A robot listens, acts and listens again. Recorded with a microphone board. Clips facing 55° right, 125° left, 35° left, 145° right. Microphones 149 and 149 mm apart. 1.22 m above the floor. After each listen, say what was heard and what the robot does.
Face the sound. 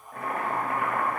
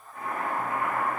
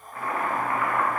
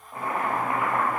The boiling: 75° right. Turn 75° right.
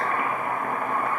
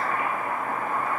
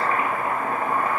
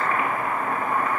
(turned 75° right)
The boiling is now 25° right. Turn 25° right.
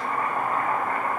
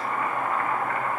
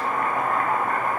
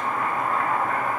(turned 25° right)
Found it: boiling, straight ahead, 1 to 2 m away.